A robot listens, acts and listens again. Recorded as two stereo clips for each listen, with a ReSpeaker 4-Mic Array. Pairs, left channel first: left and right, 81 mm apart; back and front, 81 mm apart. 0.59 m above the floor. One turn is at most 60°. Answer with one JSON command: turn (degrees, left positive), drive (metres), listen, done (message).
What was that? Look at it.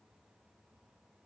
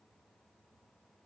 {"listen": true}
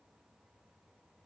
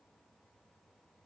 {"listen": true}
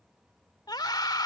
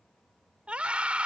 {"turn": 60}
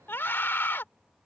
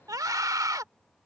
{"turn": 30}
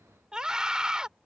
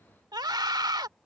{"turn": -10}
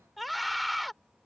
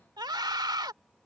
{"done": "Facing the scream."}